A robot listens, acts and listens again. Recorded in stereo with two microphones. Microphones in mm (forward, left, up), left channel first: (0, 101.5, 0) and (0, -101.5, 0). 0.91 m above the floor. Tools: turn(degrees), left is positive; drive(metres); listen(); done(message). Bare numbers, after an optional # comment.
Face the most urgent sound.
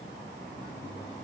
listen()
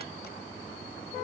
listen()
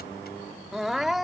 turn(30)
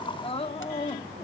# So it is at 150° left.
turn(150)
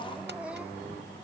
listen()
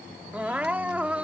done("Facing the crying.")